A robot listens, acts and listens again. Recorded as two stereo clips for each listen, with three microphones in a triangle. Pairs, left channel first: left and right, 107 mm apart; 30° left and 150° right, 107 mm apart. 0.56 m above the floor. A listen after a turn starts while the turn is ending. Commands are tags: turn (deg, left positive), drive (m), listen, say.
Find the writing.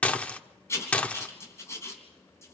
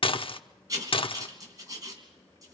<turn deg="155"/>
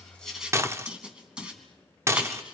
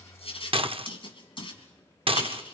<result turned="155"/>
<turn deg="-10"/>
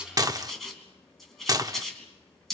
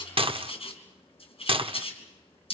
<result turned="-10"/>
<say>Facing the writing, 2 to 4 m away.</say>